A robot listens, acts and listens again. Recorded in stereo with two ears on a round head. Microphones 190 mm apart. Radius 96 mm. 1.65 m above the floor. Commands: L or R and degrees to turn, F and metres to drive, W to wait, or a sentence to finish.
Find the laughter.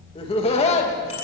L30
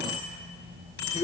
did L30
L30
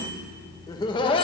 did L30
L25
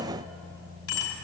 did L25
W
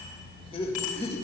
L30
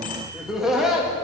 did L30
Facing the laughter, 2 to 4 m away.